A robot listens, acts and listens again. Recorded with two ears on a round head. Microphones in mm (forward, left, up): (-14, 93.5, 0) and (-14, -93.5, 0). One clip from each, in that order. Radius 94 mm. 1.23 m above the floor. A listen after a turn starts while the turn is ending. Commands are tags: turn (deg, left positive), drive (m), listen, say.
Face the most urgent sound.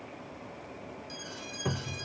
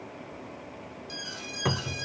<turn deg="-30"/>
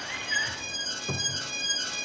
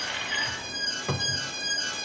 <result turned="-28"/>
<turn deg="20"/>
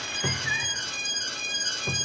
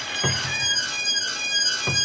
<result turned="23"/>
<say>Facing the alarm.</say>